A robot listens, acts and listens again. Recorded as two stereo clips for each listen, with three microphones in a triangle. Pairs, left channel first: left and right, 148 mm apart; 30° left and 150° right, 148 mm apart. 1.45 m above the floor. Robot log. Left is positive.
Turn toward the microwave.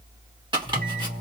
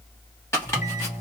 end: Facing the microwave.